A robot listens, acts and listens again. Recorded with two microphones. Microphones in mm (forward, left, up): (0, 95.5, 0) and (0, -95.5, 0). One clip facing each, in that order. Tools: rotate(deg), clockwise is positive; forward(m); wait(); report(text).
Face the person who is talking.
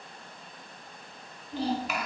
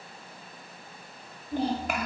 rotate(50)
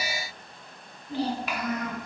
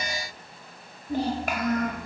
rotate(60)
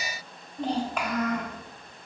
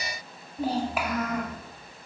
report("Facing the child speaking.")